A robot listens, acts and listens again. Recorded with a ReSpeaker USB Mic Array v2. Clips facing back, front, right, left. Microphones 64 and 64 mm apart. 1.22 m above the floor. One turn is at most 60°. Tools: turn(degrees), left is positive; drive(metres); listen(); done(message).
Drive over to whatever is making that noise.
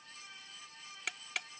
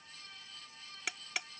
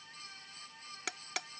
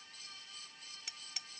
turn(degrees=-60)
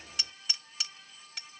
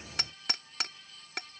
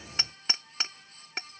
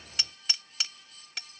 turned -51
turn(degrees=-35)
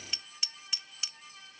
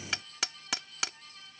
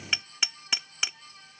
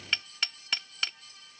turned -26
turn(degrees=-10)
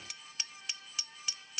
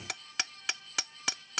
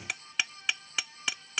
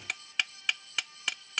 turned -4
drive(metres=1.0)
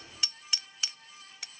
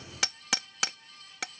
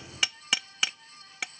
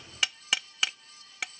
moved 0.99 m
drive(metres=1.0)
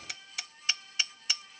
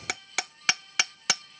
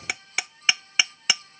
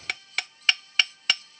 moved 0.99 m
turn(degrees=-10)
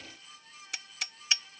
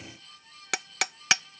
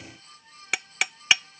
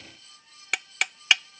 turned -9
drive(metres=1.0)
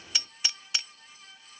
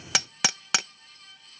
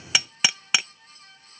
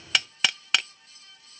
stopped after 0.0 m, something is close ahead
done("I am next to the hammering.")